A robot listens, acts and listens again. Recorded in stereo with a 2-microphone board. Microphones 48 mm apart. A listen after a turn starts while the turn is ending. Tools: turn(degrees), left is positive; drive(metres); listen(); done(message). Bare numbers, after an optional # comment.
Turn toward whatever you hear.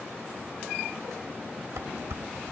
turn(-90)
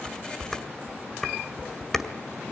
done("Facing the dishes clattering.")